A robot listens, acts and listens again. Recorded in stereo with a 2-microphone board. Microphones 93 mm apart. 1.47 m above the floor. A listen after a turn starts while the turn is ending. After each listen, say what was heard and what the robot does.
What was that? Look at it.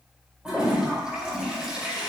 Turn 30° right.
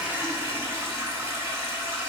So it is at 140° right. Turn 140° right.
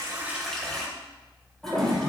Found it: a toilet flushing, straight ahead.